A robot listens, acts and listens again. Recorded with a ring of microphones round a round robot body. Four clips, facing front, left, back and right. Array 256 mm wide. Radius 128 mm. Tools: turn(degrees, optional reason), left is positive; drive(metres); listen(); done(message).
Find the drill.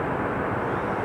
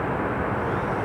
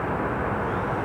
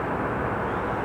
listen()
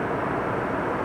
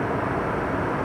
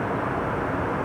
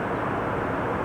listen()
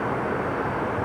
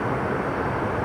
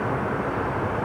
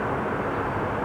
done("I can't make out a drill to turn to.")